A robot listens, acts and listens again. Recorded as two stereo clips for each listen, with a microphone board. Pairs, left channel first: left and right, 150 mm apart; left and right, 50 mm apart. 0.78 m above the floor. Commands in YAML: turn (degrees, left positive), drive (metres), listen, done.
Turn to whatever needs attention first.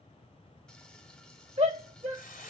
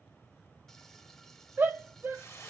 turn: -45
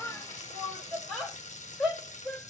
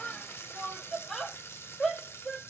done: "Found it: a shout, straight ahead, 1 to 2 m away."